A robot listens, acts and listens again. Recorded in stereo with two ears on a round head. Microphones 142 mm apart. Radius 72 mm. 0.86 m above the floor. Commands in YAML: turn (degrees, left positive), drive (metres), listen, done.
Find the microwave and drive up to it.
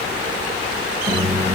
turn: -30
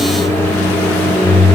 turn: 15
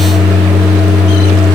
drive: 1.0
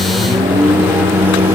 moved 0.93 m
turn: -10
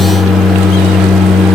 drive: 1.0
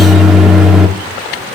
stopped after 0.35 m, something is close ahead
done: "Arrived at the microwave, straight ahead."